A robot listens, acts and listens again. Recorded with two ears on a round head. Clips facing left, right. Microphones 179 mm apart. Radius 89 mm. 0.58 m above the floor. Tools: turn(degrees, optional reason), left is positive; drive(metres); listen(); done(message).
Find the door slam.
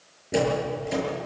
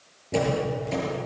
turn(degrees=30)
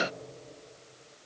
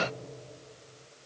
listen()
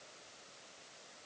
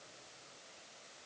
done("I heard a door slam, but can't make it out now. It was about 15° right or 135° left.")